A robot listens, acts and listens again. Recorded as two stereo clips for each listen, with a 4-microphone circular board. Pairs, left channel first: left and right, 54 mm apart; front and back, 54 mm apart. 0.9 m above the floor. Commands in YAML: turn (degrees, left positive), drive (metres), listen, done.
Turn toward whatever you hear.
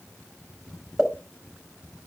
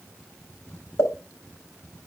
turn: 10
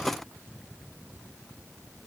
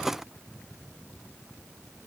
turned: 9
done: "I heard a pop from this way, but can't make it out now."